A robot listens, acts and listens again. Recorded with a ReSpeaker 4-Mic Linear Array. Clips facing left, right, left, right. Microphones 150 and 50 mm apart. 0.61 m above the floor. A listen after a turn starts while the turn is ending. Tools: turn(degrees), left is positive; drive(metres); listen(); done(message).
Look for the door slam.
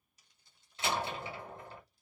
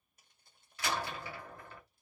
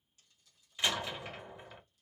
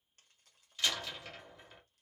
turn(degrees=25)
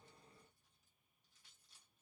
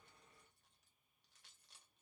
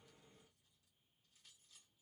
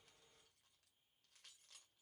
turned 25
listen()
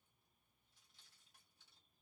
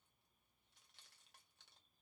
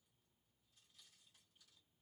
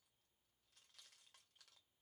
done("I heard a door slam, but can't make it out now. It was about straight ahead or 130° left.")